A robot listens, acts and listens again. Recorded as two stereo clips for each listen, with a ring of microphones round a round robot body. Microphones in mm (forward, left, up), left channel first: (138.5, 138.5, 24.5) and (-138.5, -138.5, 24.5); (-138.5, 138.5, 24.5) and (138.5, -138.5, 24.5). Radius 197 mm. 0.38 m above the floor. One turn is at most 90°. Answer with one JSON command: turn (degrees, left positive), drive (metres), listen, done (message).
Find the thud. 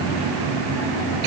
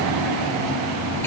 {"listen": true}
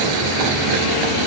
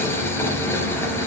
{"listen": true}
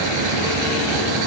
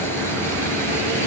{"done": "I can't make out a thud to turn to."}